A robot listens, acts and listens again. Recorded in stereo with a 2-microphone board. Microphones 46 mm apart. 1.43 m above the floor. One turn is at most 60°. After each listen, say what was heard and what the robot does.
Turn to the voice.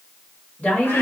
The woman speaking: about 20° left or 160° left. Turn 20° left.
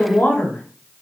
So it is at 140° left. Turn 60° left.
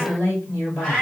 The woman speaking is now 75° left. Turn 60° left.
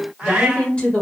The woman speaking is now 30° left. Turn 30° left.
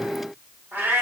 Keep listening.
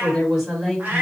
Found it: a woman speaking, straight ahead, 1 to 2 m away.